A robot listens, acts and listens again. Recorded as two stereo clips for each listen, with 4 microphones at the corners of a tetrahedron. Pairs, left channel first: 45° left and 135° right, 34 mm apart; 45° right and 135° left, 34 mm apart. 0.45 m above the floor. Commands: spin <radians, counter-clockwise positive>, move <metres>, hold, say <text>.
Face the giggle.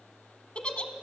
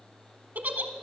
spin 1.83
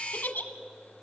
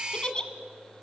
spin 0.35
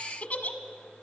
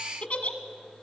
say Found it: a giggle, straight ahead.